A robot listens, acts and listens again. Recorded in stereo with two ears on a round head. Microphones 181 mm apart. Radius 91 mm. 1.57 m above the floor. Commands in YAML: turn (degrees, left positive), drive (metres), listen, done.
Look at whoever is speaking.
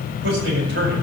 turn: -55
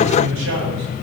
turn: -75
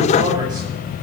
turn: -25
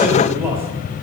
turn: -10
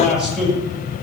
done: "Facing the man speaking, over 4 m away."